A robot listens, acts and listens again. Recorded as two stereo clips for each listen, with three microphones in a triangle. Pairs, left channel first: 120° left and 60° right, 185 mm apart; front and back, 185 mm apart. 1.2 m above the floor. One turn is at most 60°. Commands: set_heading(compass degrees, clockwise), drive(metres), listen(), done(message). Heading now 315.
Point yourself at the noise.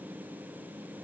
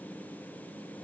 listen()
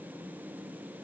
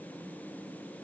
listen()
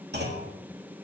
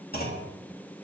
set_heading(350)
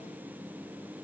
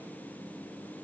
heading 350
done("I heard a clunk from this way, but can't make it out now.")